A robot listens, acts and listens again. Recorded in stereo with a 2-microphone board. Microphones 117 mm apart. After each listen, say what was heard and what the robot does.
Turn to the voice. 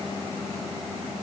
Keep listening.
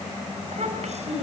Turn 90° right.
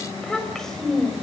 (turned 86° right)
Facing the child speaking, 2 to 4 m away.